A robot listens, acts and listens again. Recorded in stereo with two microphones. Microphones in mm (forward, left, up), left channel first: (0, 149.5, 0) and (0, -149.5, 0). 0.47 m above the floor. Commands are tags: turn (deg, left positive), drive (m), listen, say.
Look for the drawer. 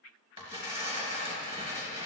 <listen/>
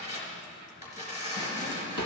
<turn deg="-90"/>
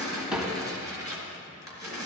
<say>Found it: a drawer, straight ahead.</say>